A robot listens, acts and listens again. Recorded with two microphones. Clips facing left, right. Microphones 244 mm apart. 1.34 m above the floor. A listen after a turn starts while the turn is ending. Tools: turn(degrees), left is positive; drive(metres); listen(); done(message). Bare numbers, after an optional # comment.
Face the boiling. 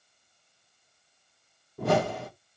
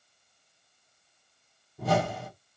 listen()
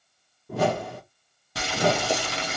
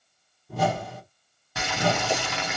# The boiling: about 35° left or 145° left.
turn(35)
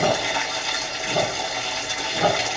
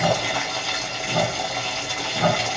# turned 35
done("Facing the boiling, 1 to 2 m away.")